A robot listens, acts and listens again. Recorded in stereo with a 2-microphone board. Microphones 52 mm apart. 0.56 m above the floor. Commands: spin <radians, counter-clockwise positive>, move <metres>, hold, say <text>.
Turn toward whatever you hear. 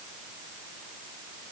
hold
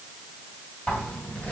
spin 0.52
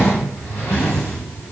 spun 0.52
spin 2.01
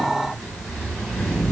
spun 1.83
spin 0.17
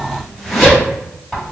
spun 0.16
say Facing the zipper.